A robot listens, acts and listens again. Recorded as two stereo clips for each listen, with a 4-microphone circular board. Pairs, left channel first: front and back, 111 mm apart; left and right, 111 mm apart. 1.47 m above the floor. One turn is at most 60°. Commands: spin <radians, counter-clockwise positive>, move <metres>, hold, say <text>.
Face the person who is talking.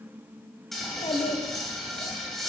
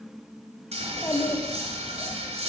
spin 0.44
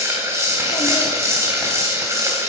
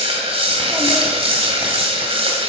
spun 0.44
hold
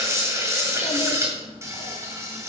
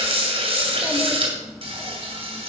hold
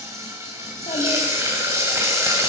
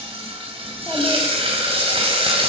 say I heard a child speaking from this way, but can't make it out now.